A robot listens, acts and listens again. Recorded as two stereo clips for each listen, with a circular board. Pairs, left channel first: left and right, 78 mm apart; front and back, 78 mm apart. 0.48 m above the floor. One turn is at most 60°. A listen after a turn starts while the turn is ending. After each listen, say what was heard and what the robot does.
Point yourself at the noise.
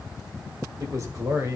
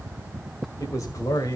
The man speaking: 40° right. Turn 40° right.
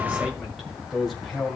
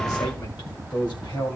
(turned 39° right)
Found it: a man speaking, straight ahead.